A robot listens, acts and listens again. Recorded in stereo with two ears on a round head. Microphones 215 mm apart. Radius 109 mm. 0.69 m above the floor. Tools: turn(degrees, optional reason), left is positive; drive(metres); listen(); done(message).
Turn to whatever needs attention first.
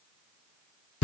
listen()
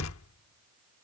listen()
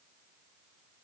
done("I can't make out anything urgent to turn to.")